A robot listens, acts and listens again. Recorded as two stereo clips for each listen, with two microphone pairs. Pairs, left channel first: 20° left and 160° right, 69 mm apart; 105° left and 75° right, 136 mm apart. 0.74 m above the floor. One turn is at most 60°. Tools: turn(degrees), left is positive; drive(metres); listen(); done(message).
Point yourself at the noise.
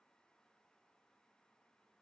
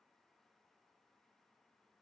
listen()
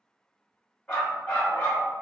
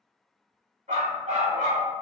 turn(degrees=-50)
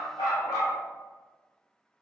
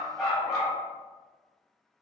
turn(degrees=15)
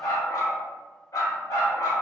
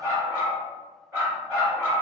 done("Found it: a dog barking, straight ahead.")